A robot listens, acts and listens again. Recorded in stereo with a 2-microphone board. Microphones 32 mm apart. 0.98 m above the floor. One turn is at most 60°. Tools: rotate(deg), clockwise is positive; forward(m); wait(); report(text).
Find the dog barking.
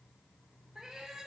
wait()
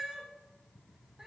wait()
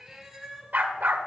rotate(60)
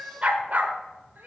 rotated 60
rotate(50)
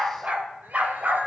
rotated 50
rotate(50)
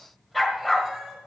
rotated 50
report("Found it: a dog barking, straight ahead, 1 to 2 m away.")